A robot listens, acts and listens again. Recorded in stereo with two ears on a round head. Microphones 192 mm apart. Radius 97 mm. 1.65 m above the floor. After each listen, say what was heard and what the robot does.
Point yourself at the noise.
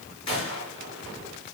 The gunshot: about 25° left or 155° left. Turn 25° left.
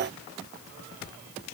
Keep listening.
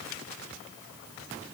I heard a gunshot, but can't make it out now. It was about straight ahead or 130° left.